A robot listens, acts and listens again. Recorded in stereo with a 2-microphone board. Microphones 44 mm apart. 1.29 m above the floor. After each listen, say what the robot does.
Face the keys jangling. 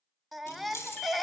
Turn 90° left.
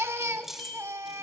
Found it: keys jangling, straight ahead, 2 to 4 m away.